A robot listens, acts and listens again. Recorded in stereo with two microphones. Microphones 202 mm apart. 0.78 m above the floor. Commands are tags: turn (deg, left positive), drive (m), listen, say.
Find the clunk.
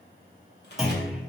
<turn deg="30"/>
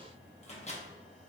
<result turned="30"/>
<listen/>
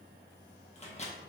<say>I heard a clunk, but can't make it out now. It was about 30° right or 150° left.</say>